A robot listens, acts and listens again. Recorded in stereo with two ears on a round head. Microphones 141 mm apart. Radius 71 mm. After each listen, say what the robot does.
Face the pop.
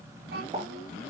Turn 35° right.
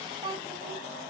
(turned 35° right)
Keep listening.
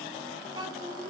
I heard a pop, but can't make it out now. It was about straight ahead or 110° right.